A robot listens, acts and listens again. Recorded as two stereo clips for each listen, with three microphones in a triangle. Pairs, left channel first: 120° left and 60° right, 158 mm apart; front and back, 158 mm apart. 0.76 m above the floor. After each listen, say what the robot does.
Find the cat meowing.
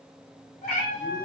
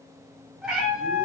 Turn 100° left.
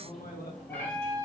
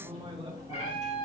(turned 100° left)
Turn 55° left.
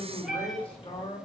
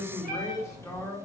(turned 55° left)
Turn 25° left.
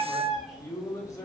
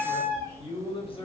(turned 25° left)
Turn 30° left.
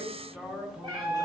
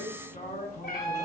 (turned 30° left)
Found it: a cat meowing, straight ahead.